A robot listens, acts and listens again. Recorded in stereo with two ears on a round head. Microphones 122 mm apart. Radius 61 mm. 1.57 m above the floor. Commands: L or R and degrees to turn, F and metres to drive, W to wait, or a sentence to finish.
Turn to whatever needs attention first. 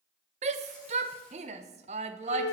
R50
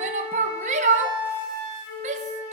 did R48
R70
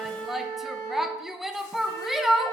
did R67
Found it: a shout, straight ahead, under 1 m away.